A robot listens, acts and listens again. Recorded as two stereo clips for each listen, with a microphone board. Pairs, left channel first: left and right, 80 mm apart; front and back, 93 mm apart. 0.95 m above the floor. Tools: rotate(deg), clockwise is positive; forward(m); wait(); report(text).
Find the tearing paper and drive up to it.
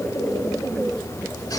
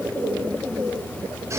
wait()
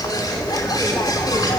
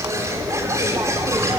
wait()
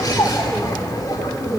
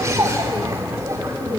report("I can't make out tearing paper to turn to.")